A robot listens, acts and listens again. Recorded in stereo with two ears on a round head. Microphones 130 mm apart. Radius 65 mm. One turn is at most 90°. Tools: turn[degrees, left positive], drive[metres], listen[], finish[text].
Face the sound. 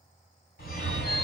Thought: The phone ringing: about 70° left or 110° left.
Action: turn[70]
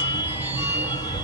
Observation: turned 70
Thought: So it is at 40° left.
Action: turn[40]
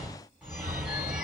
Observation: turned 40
Action: finish[Found it: a phone ringing, straight ahead, 2 to 4 m away.]